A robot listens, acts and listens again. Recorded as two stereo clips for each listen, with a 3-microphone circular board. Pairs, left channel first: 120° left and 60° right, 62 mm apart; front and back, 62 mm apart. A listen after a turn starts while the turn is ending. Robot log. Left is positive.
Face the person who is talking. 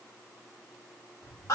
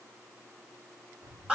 cmd idle
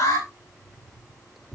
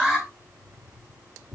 cmd idle
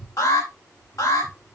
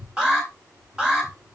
end: I can't make out anyone speaking, only an alarm and keys jangling.